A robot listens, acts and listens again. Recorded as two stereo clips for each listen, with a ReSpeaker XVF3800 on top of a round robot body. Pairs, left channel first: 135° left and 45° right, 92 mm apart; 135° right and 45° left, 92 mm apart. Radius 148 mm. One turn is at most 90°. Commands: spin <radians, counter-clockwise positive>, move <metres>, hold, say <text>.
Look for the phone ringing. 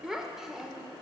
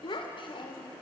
hold
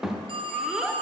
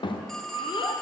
spin -0.87
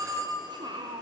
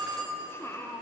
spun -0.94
say Found it: a phone ringing, straight ahead.